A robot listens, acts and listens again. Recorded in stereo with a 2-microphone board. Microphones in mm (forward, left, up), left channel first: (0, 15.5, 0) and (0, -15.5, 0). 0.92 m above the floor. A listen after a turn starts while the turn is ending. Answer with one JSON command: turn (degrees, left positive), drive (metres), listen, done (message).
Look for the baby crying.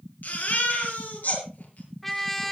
{"turn": 70}
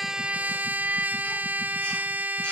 {"listen": true}
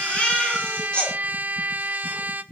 {"turn": 35}
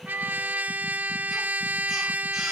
{"listen": true}
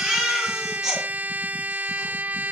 {"turn": -15}
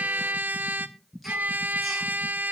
{"listen": true}
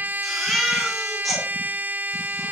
{"done": "Found it: a baby crying, straight ahead."}